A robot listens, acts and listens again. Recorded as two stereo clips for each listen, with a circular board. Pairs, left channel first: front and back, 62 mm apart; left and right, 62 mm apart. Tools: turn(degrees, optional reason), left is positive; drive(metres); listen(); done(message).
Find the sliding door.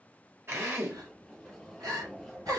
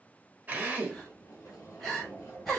turn(degrees=85, reason="The sliding door: 85° left.")
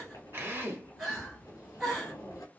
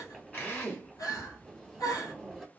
done("Facing the sliding door.")